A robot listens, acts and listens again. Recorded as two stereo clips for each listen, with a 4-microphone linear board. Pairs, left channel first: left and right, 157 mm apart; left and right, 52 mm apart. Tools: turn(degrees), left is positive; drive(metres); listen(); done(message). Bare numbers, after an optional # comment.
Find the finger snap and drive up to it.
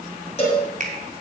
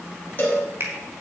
# The finger snap: about 60° right or 120° right.
turn(-60)
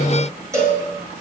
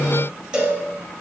listen()
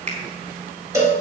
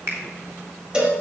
# So it is at 50° right.
turn(-50)
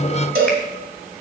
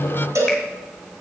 listen()
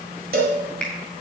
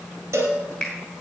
# The finger snap is now 10° left.
turn(10)
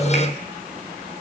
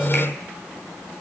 listen()
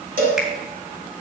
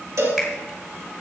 listen()
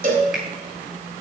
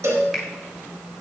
done("Facing where the finger snap came from. I can't hear it now. I did not reach it.")